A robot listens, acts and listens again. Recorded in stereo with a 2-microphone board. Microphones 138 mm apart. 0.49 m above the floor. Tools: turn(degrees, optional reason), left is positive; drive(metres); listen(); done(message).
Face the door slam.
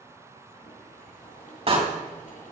turn(degrees=-45, reason="The door slam: about 45° right or 135° right.")
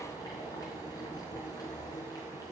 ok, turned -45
listen()
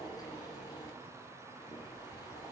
done("I heard a door slam, but can't make it out now. It was about straight ahead or 90° right.")